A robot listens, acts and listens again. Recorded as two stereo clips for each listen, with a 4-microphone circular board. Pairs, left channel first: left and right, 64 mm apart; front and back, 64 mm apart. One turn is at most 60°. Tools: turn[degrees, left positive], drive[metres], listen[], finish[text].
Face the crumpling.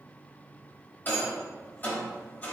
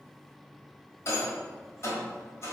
Action: listen[]
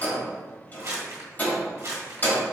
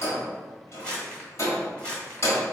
Thought: The crumpling: 70° right.
Action: turn[-60]
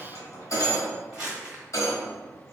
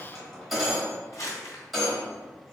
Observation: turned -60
Thought: The crumpling is now 15° right.
Action: turn[-15]
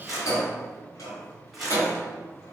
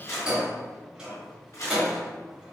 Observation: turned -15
Action: finish[Found it: crumpling, straight ahead.]